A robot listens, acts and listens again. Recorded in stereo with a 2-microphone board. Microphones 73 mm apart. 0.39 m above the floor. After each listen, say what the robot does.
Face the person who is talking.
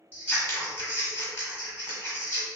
Keep listening.
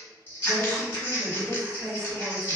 Turn 20° right.
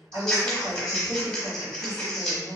Turn 135° right.
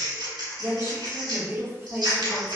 Turn 30° right.
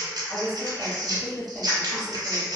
Turn 20° right.
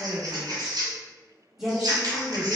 Found it: a woman speaking, straight ahead, 1 to 2 m away.